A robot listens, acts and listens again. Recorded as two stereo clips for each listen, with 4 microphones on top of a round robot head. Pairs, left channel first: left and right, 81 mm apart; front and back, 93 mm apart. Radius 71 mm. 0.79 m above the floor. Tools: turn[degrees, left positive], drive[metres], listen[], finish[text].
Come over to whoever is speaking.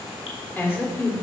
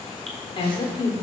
Thought: The woman speaking: 25° left.
Action: turn[25]
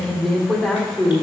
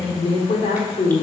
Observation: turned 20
Action: drive[1.0]
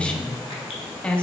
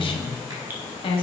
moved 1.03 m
Thought: The woman speaking is now 15° left.
Action: turn[15]
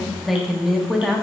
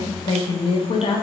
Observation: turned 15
Action: drive[1.0]
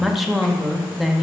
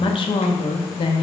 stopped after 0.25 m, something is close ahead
Action: finish[Arrived at the woman speaking, straight ahead.]